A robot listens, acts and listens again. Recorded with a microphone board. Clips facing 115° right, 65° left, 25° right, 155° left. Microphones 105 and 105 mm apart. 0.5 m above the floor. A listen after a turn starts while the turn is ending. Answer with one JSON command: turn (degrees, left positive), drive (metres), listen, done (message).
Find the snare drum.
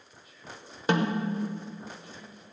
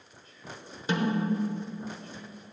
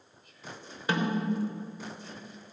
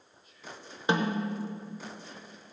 {"turn": -135}
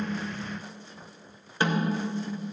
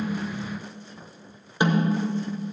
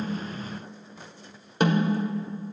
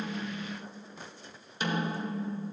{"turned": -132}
{"done": "Facing the snare drum."}